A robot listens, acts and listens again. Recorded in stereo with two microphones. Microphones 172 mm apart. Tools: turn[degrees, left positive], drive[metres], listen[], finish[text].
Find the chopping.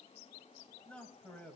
Action: listen[]
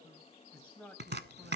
Action: turn[-90]
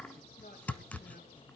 Thought: So it is at 10° left.
Action: turn[10]
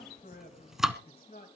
Action: finish[Facing the chopping, under 1 m away.]